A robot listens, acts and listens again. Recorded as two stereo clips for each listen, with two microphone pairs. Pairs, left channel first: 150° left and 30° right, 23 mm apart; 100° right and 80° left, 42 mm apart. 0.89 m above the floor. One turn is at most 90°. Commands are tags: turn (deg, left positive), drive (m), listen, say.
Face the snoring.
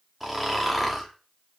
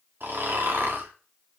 <turn deg="55"/>
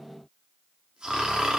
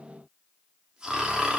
<turn deg="10"/>
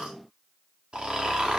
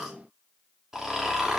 <say>Found it: snoring, straight ahead.</say>